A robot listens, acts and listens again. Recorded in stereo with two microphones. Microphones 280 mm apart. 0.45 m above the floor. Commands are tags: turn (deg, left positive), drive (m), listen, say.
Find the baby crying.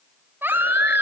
<turn deg="-30"/>
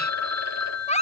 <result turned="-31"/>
<turn deg="25"/>
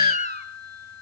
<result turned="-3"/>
<turn deg="25"/>
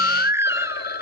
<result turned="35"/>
<turn deg="-10"/>
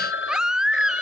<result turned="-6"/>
<say>Facing the baby crying.</say>